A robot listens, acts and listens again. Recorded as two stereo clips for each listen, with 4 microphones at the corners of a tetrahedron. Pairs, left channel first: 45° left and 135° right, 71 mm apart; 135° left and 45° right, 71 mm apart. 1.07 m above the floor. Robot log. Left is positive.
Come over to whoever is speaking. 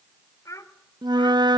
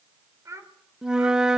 cmd fwd 1.0
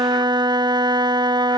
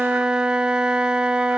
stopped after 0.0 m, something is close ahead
cmd idle
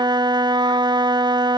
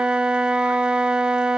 cmd idle
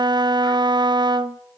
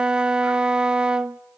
end: I heard a child speaking from this way, but can't make it out now. I did not reach it.